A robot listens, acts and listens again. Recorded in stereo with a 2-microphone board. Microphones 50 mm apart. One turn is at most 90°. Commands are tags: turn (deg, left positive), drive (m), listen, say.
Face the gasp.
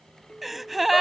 <turn deg="-30"/>
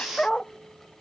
<listen/>
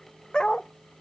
<say>I heard a gasp, but can't make it out now. It was about 25° left or 145° right.</say>